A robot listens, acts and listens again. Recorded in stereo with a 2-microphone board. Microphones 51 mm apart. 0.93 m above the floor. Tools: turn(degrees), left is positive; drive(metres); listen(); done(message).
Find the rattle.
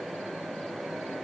listen()
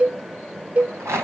turn(degrees=-60)
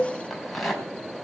done("Found it: a rattle, straight ahead, over 4 m away.")